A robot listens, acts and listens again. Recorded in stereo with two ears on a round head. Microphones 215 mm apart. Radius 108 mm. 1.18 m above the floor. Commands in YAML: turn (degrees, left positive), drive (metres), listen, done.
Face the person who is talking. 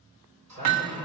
turn: -30
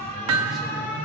listen: true
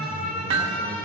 listen: true
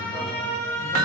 done: "I heard a man speaking, but can't make it out now. It was about straight ahead or 120° right."